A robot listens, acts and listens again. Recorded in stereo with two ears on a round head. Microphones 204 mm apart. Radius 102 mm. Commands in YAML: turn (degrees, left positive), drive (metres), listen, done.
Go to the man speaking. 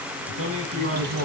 turn: -70
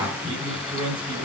turn: -30
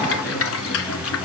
listen: true
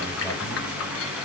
listen: true
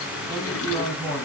turn: 10
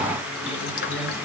listen: true
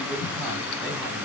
listen: true
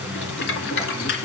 done: "Facing where the man speaking came from. I can't hear it now. I did not reach it."